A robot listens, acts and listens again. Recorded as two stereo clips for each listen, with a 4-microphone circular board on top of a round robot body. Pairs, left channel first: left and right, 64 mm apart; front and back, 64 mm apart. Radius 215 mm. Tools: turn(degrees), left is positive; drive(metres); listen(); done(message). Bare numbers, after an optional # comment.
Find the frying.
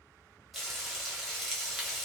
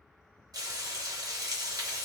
# The frying: straight behind.
turn(180)
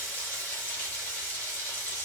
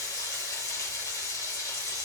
# The frying is now 30° left.
turn(30)
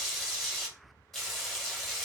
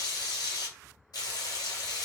done("Found it: frying, straight ahead.")